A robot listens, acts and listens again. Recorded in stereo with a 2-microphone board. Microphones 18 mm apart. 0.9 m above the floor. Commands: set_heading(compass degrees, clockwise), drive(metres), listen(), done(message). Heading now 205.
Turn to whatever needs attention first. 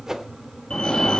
set_heading(155)
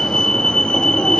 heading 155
set_heading(85)
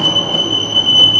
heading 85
done("Facing the fire alarm, 2 to 4 m away.")